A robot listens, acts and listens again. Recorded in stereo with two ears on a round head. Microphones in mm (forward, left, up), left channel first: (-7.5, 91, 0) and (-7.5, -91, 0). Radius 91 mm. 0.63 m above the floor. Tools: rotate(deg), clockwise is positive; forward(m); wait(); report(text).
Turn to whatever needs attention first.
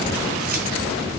wait()
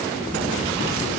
wait()
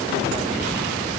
report("I can't make out anything urgent to turn to.")